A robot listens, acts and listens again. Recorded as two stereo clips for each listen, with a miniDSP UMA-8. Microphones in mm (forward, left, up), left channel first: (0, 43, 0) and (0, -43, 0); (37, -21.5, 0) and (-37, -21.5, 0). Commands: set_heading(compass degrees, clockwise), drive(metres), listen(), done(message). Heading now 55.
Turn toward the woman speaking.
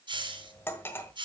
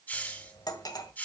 listen()
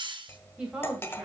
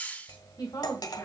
set_heading(70)
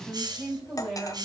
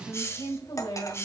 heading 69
done("Facing the woman speaking, 2 to 4 m away.")